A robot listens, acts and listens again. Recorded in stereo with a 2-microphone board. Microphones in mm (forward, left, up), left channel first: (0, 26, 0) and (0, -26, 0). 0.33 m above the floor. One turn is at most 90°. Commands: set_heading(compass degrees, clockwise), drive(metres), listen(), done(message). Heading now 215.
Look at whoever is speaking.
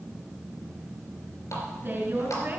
set_heading(265)
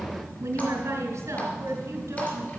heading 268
set_heading(343)
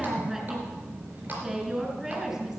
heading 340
done("Found it: a woman speaking, straight ahead.")